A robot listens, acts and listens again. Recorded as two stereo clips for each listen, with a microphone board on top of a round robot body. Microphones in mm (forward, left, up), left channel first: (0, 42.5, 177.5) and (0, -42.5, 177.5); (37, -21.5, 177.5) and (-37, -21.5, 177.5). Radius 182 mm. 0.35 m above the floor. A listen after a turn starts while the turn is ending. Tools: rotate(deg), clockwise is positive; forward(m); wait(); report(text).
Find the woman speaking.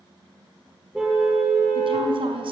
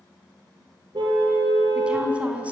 rotate(105)
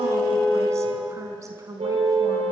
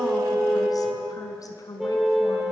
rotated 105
rotate(40)
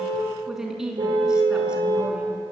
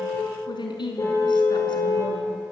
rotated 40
rotate(10)
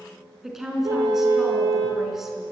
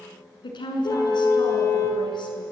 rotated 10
report("Facing the woman speaking.")